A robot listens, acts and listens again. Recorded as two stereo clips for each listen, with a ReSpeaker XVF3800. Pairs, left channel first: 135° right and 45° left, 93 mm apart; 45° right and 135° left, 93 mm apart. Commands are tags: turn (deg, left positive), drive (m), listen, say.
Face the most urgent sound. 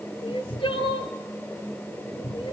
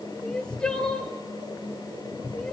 <turn deg="-125"/>
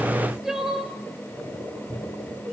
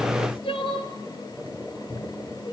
<turn deg="-40"/>
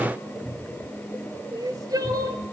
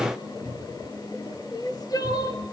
<say>Found it: crying, straight ahead, 1 to 2 m away.</say>